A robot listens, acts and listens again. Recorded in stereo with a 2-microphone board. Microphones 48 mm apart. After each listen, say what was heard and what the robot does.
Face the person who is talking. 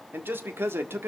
The man speaking: about 60° right or 120° right. Turn 60° right.
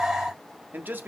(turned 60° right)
So it is at 50° right. Turn 50° right.
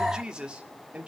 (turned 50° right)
The man speaking is now 30° right. Turn 30° right.
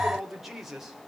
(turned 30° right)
The man speaking is now 10° right. Turn 10° right.
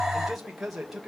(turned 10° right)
Found it: a man speaking, straight ahead.